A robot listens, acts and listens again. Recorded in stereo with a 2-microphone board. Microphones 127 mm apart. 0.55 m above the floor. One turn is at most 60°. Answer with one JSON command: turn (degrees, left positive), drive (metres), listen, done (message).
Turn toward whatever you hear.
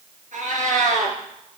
{"turn": -60}
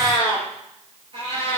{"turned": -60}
{"turn": -50}
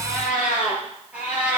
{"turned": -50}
{"turn": -10}
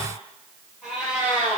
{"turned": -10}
{"turn": -10}
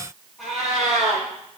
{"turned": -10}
{"done": "Found it: a cat meowing, straight ahead."}